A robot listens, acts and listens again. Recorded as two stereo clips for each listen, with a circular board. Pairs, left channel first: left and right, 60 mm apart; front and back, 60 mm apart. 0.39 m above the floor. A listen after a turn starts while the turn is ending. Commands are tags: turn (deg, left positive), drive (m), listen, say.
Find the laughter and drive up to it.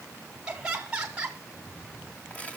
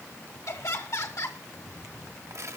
<turn deg="-20"/>
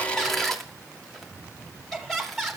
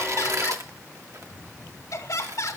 <drive m="1.0"/>
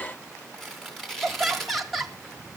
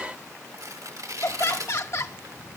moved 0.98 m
<drive m="1.0"/>
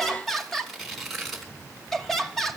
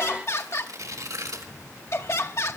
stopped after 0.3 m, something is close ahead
<say>Arrived at the laughter, straight ahead.</say>